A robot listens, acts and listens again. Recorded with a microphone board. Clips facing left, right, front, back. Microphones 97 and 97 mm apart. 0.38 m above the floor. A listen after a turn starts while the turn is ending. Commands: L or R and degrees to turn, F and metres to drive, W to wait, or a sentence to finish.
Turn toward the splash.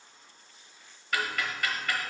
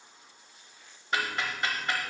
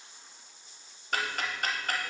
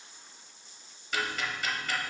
W
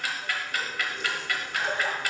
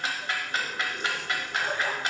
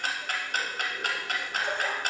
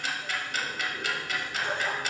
L25
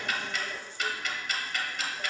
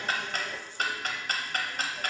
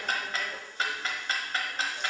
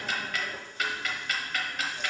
Facing where the splash came from. I can't hear it now.